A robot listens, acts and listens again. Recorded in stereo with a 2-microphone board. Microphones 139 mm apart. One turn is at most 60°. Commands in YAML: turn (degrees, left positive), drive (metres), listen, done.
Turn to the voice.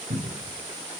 listen: true
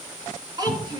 turn: -30
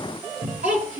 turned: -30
turn: -60
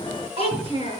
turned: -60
turn: -40
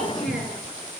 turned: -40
listen: true
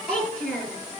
turn: 10
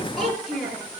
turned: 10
done: "Facing the child speaking."